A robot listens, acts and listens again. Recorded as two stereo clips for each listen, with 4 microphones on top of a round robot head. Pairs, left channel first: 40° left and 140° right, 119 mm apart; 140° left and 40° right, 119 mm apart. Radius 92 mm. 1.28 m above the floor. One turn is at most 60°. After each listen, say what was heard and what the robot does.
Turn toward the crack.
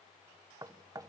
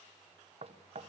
Keep listening.
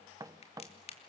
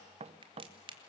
Facing the crack, 2 to 4 m away.